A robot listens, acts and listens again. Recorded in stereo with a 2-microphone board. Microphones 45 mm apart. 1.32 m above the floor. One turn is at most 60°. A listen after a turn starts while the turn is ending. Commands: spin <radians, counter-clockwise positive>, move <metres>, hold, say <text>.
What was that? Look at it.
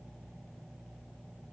hold
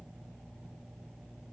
hold
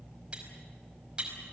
spin -0.44
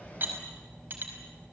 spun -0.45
spin -1.05
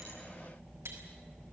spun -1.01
spin -1.05
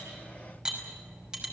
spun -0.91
spin -0.35
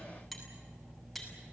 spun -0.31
hold
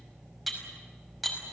say Found it: cutlery clinking, straight ahead, over 4 m away.